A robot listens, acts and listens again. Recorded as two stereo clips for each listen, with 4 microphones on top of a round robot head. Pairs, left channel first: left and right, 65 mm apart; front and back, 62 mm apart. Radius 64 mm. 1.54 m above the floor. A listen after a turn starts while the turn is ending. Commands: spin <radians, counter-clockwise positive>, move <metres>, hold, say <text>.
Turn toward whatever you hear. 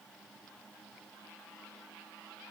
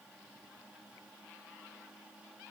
hold
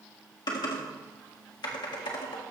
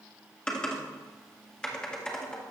spin 1.40
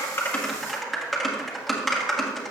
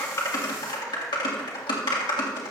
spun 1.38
say Found it: typing on a keyboard, straight ahead, 1 to 2 m away.